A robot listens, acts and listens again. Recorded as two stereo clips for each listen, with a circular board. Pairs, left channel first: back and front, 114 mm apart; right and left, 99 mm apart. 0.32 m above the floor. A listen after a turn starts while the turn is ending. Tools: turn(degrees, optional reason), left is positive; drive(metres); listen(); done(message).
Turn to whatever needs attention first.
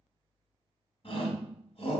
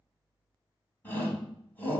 turn(degrees=-160, reason="The shout: 160° right.")
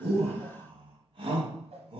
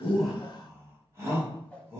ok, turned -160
turn(degrees=30, reason="The shout is now 30° left.")
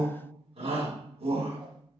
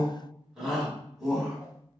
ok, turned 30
done("Facing the shout.")